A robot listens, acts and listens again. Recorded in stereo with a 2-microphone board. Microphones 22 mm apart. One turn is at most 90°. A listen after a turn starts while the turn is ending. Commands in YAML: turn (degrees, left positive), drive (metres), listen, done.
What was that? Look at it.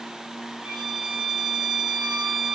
turn: -60
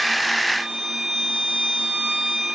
turn: -55
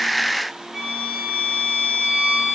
turn: -15
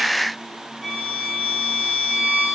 done: "Facing the violin."